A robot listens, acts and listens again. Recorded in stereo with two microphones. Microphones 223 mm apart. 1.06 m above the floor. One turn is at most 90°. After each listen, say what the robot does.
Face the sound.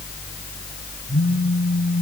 Turn 15° left.
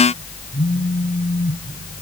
Found it: a phone buzzing, straight ahead.